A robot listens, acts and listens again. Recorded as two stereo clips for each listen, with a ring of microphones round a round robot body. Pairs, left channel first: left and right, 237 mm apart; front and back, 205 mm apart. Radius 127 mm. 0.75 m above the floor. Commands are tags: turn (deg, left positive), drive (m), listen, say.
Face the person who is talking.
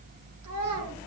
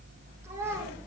<turn deg="-100"/>
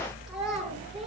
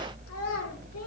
<say>Facing the child speaking, over 4 m away.</say>